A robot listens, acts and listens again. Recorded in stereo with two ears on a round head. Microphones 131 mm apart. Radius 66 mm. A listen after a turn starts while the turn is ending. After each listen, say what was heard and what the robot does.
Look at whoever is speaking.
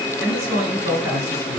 Turn 30° right.
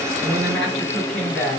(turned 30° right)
So it is at 15° left. Turn 15° left.
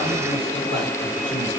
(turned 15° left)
Keep listening.
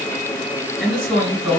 Facing the man speaking.